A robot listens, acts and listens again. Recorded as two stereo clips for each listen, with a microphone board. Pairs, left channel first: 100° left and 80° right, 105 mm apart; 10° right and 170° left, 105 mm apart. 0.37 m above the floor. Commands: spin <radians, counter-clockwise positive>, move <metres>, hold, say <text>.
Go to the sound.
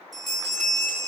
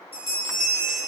spin 0.17
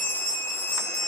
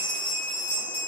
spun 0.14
move 1.0
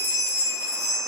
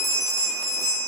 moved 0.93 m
move 1.0
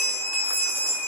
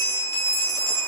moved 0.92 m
spin -0.17
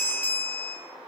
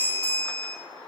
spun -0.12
move 1.0
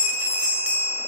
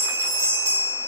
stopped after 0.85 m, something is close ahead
say I am next to the bell.